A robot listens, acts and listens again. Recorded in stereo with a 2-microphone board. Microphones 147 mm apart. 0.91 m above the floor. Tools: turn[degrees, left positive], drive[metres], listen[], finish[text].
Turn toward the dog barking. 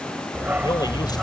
Action: turn[-30]
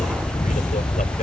Thought: So it is at 35° left.
Action: turn[35]
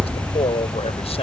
Thought: The dog barking is now 25° left.
Action: turn[25]
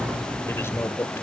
Action: finish[Found it: a dog barking, straight ahead.]